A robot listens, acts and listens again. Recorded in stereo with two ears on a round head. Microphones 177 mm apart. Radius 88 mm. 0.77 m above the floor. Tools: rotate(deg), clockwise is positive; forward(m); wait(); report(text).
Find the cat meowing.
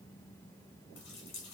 wait()
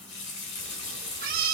rotate(45)
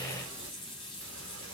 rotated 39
wait()
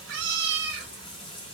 rotate(125)
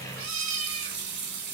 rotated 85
rotate(45)
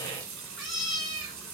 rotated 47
report("Found it: a cat meowing, straight ahead.")